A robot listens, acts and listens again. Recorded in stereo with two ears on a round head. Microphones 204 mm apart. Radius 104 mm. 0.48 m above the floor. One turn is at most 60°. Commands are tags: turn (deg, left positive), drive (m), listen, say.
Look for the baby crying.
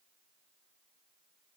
<listen/>
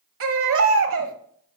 <turn deg="-60"/>
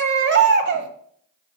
<turn deg="-50"/>
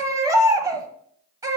<turn deg="-15"/>
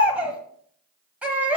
<say>Facing the baby crying, under 1 m away.</say>